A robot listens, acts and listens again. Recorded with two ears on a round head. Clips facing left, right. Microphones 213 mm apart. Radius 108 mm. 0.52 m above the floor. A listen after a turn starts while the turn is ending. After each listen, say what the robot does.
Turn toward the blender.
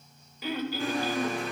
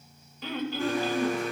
Turn 60° left.
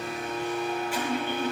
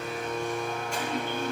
Facing the blender, over 4 m away.